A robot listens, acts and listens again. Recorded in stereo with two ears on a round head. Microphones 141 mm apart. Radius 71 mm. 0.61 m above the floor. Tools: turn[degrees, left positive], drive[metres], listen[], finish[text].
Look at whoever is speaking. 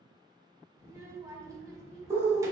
Thought: The child speaking: about 20° right or 160° right.
Action: turn[-20]
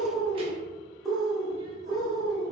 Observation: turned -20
Action: listen[]
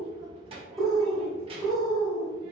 Thought: So it is at 140° right.
Action: turn[-140]
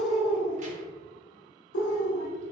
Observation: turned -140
Action: listen[]
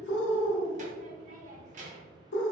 Thought: The child speaking is now 50° right.
Action: turn[-50]
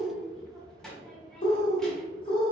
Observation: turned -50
Action: finish[Facing the child speaking.]